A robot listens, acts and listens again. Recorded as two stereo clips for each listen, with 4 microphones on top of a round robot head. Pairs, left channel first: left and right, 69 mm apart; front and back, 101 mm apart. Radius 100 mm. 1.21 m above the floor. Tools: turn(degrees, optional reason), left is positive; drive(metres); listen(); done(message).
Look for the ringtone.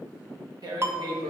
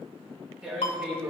turn(degrees=-40, reason="The ringtone: 40° right.")
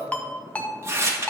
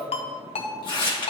turn(degrees=20, reason="The ringtone is now 20° left.")
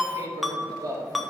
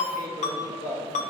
done("Found it: a ringtone, straight ahead, under 1 m away.")